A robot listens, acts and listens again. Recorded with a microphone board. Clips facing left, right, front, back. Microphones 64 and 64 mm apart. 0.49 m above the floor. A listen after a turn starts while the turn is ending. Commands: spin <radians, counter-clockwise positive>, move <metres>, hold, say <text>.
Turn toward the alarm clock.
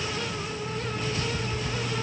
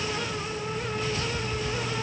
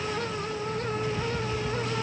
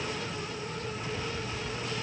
spin 0.35
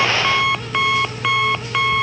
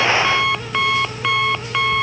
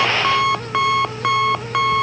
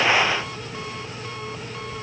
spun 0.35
say Found it: an alarm clock, straight ahead.